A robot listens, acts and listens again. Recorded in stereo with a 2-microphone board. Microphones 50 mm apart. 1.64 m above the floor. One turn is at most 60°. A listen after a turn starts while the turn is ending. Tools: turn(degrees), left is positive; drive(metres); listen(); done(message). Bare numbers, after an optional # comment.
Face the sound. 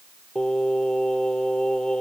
# The singing: about 15° left or 165° left.
turn(15)
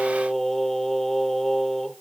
done("Found it: singing, straight ahead.")